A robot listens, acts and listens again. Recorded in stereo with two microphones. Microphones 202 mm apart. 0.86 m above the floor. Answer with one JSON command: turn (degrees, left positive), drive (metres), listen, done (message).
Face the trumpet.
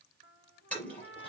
{"turn": 70}
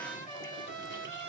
{"turn": 40}
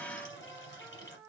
{"done": "Facing the trumpet, 2 to 4 m away."}